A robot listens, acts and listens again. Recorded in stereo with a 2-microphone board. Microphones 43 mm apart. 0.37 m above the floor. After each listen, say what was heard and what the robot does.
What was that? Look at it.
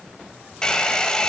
The hair dryer: about 15° left or 165° left. Turn 15° left.
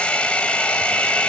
So it is at 155° left. Turn 155° left.
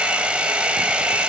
The hair dryer is now 30° right. Turn 30° right.
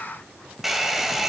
Facing the hair dryer.